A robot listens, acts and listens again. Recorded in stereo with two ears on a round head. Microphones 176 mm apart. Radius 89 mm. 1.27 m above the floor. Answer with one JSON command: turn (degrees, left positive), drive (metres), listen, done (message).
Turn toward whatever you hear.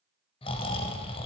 {"turn": 30}
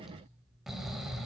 {"done": "Facing the snoring."}